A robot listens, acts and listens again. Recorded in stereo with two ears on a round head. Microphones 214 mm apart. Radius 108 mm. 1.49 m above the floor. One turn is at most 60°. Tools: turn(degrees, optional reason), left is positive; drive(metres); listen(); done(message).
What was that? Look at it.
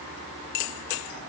listen()
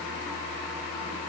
listen()
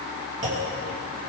turn(degrees=-30, reason="The clunk: about 30° right or 150° right.")
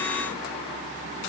listen()
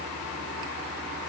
done("I heard a clunk, but can't make it out now. It was about straight ahead or 120° right.")